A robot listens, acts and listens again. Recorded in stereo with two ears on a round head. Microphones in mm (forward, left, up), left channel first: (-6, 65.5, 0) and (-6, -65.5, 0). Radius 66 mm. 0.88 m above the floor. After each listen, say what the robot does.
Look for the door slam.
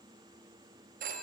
Keep listening.
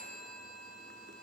Keep listening.
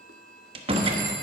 Turn 40° right.
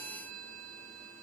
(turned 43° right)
Keep listening.
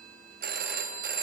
I heard a door slam, but can't make it out now. It was about 5° left or 100° right.